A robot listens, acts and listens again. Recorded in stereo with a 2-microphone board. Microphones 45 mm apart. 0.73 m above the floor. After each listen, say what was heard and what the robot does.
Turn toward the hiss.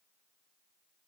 Keep listening.
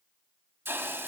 The hiss: about 60° right or 120° right. Turn 60° right.
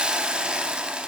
So it is at 25° right. Turn 25° right.
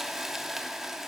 The hiss is now 10° right. Turn 10° right.
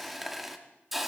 Found it: a hiss, straight ahead, 1 to 2 m away.